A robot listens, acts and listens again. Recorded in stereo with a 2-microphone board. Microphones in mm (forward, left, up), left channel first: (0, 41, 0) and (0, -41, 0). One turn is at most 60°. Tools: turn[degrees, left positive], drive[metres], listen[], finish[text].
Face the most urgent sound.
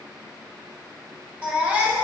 Thought: The baby crying: about 15° right or 165° right.
Action: turn[-15]
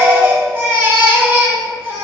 Thought: So it is at 155° right.
Action: turn[-60]
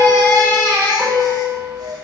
Thought: The baby crying is now 90° right.
Action: turn[-60]
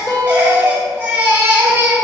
Thought: The baby crying is now 25° right.
Action: turn[-25]
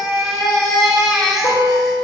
Action: finish[Found it: a baby crying, straight ahead.]